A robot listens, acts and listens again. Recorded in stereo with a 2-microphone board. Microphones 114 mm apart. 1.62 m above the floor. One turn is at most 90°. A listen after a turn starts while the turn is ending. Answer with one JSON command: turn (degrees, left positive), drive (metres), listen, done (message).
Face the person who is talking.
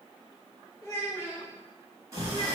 {"turn": 25}
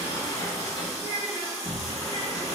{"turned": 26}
{"turn": 90}
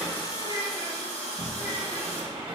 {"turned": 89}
{"turn": 50}
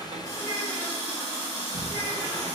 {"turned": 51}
{"listen": true}
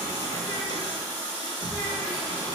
{"done": "I heard a child speaking from this way, but can't make it out now."}